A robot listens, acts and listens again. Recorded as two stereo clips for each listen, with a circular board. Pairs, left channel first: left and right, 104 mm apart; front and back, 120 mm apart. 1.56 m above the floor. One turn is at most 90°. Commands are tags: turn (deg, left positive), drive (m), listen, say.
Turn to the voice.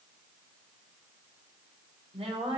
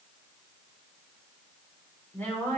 <turn deg="-75"/>
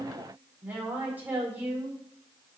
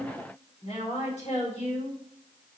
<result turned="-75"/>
<turn deg="-20"/>
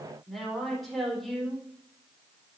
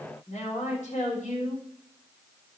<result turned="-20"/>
<say>Facing the woman speaking.</say>